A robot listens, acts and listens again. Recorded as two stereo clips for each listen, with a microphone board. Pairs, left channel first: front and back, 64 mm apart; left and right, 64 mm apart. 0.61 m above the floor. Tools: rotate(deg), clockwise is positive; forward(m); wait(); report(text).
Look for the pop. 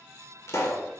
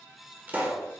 rotate(30)
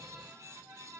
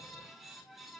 report("I heard a pop from this way, but can't make it out now.")